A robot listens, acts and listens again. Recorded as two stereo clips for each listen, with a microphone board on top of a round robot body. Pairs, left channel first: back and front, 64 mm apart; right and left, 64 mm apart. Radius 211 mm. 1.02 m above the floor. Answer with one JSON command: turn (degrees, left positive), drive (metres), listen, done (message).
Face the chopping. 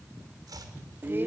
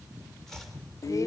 {"done": "Facing the chopping, 2 to 4 m away."}